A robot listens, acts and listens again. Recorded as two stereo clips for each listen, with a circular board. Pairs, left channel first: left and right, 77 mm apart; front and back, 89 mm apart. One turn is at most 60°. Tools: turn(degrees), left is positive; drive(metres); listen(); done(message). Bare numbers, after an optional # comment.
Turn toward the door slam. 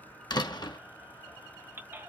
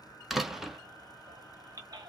# The door slam: 95° left.
turn(60)
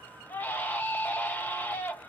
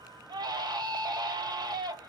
# Nothing new. It was at 35° left.
turn(35)
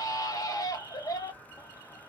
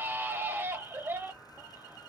done("I heard a door slam from this way, but can't make it out now.")